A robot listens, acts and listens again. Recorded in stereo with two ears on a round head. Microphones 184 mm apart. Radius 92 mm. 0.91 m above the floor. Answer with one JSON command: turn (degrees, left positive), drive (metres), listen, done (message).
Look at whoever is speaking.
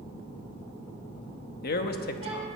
{"turn": 45}
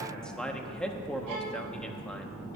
{"done": "Facing the man speaking, 1 to 2 m away."}